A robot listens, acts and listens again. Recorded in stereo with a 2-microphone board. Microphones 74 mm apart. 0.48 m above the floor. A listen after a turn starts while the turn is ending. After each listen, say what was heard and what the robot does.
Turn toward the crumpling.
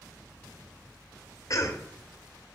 Keep listening.
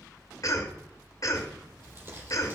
The crumpling: about 35° right or 145° right. Turn 35° right.
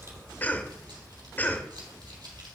So it is at 110° right. Turn 110° right.
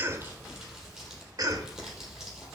Facing the crumpling.